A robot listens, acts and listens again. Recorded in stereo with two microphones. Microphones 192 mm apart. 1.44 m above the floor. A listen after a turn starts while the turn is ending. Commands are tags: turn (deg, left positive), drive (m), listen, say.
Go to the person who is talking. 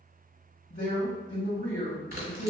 <turn deg="55"/>
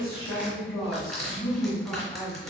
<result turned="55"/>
<drive m="1.0"/>
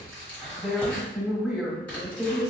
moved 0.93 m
<drive m="1.0"/>
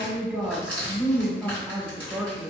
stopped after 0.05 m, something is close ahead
<say>Arrived at the woman speaking, straight ahead.</say>